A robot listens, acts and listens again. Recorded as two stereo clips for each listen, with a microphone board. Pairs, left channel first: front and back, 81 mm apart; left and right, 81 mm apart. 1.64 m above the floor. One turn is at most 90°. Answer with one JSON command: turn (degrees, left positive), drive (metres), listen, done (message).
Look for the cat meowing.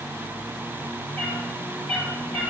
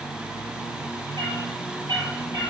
{"turn": -70}
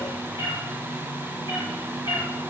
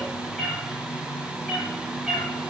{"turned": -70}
{"done": "Facing the cat meowing, over 4 m away."}